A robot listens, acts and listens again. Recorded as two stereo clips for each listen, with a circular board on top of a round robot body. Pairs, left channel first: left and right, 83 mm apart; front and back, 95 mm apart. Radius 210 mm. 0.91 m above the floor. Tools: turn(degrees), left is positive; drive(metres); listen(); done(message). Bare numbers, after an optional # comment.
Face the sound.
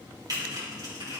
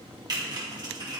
# The typing on a keyboard: 135° right.
turn(-135)
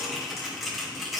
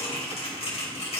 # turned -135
done("Facing the typing on a keyboard, 2 to 4 m away.")